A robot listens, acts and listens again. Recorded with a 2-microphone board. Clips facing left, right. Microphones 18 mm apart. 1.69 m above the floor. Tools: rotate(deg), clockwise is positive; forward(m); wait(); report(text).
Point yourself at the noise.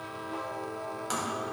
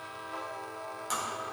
rotate(-15)
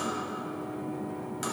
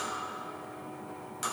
report("Facing the tapping.")